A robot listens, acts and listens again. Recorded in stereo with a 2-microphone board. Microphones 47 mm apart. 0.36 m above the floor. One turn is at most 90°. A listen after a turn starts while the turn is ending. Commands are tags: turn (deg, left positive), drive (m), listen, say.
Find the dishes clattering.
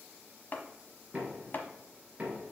<listen/>
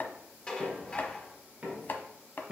<turn deg="20"/>
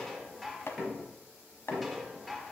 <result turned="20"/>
<say>Facing the dishes clattering, 1 to 2 m away.</say>